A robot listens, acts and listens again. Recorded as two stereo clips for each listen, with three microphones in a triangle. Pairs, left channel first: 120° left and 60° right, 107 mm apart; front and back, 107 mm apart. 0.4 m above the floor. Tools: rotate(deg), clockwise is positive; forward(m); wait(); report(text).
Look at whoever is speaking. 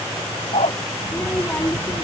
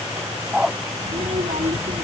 rotate(165)
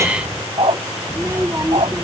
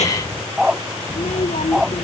report("Found it: a child speaking, straight ahead.")